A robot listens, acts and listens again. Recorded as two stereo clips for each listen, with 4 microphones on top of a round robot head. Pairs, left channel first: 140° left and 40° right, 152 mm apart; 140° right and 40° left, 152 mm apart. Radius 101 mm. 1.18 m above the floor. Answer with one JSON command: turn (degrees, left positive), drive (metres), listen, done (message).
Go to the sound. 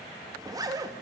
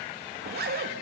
{"turn": 25}
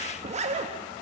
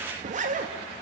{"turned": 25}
{"drive": 1.0}
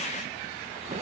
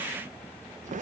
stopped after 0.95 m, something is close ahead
{"done": "I am next to the zipper."}